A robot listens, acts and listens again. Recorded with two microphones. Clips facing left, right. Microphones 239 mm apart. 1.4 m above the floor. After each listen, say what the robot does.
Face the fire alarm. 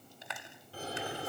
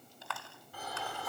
Turn 30° left.
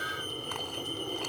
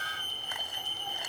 Turn 120° left.
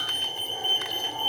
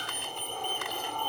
Found it: a fire alarm, straight ahead.